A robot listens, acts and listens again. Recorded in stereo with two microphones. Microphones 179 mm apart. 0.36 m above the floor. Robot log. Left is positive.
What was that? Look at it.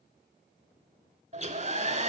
note: The hair dryer: about 40° right or 140° right.
cmd yaw -40
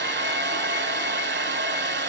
note: So it is at 100° right.
cmd yaw -100
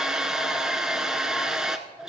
end: Facing the hair dryer.